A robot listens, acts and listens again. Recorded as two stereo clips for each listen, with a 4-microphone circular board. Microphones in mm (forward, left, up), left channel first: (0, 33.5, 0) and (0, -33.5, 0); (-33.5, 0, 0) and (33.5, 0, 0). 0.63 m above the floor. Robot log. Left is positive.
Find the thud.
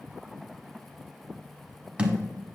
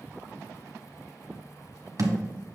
note: The thud: 20° right.
cmd yaw -20
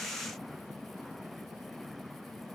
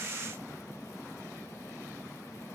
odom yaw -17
end: I heard a thud from this way, but can't make it out now.